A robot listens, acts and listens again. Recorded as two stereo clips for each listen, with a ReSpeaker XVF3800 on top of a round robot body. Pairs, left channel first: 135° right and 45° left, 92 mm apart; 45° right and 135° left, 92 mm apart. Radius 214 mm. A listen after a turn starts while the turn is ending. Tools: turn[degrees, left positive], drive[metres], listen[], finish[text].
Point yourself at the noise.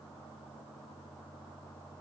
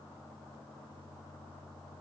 Action: listen[]
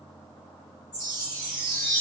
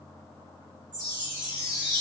Thought: The chime: straight behind.
Action: turn[180]
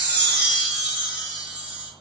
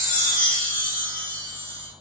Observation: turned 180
Thought: The chime is now 30° right.
Action: turn[-30]
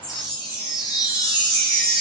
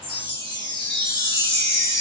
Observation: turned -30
Thought: The chime is now 10° right.
Action: turn[-10]
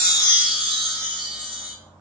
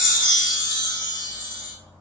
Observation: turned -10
Action: finish[Found it: a chime, straight ahead.]